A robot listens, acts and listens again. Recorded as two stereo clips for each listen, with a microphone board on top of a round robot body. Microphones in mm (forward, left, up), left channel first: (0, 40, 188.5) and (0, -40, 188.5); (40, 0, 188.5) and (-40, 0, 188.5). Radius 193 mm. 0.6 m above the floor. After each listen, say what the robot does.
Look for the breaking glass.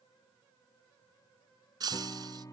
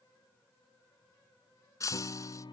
Turn 50° right.
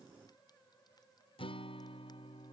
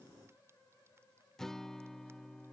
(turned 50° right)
I heard breaking glass from this way, but can't make it out now.